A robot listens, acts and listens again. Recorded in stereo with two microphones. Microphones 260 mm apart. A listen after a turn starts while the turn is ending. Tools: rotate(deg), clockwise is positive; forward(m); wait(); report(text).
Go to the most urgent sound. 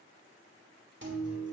wait()
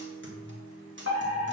rotate(-65)
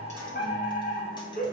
rotate(-40)
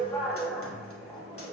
forward(1.0)
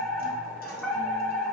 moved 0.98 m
forward(1.0)
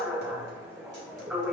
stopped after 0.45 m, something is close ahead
report("Arrived at the fire alarm, straight ahead.")